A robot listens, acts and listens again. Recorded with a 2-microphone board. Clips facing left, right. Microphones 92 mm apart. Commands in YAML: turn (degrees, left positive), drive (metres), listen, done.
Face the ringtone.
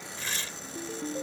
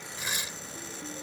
turn: 60
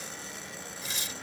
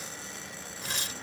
listen: true
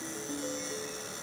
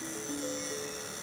done: "Facing the ringtone."